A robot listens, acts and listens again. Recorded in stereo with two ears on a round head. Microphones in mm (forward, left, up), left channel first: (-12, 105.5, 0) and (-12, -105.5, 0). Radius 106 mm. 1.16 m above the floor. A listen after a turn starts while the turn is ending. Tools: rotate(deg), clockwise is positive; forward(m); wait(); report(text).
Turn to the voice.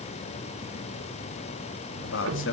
rotate(-60)
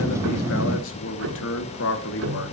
rotate(-55)
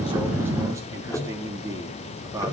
rotate(15)
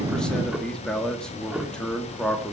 report("Found it: a man speaking, straight ahead.")